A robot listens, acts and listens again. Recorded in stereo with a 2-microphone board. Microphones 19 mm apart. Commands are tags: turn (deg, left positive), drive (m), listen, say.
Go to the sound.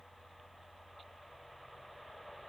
<listen/>
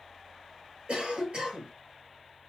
<turn deg="-90"/>
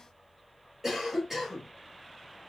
<turn deg="-15"/>
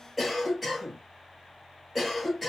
<drive m="1.0"/>
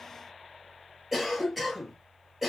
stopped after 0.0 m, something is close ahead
<say>Blocked. The cough is further on, straight ahead.</say>